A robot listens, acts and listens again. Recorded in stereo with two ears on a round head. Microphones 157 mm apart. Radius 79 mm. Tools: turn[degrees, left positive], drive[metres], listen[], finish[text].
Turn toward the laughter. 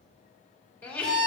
Action: turn[30]
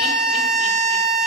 Action: listen[]
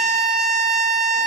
Action: listen[]
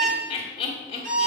Thought: So it is at 135° left.
Action: turn[135]
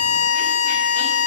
Action: listen[]
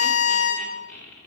Action: finish[Found it: laughter, straight ahead.]